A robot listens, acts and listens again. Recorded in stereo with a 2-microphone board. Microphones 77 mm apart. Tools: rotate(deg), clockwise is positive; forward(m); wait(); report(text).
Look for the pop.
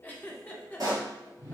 rotate(50)
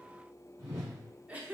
wait()
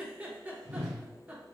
report("I heard a pop, but can't make it out now. It was about straight ahead or 80° right.")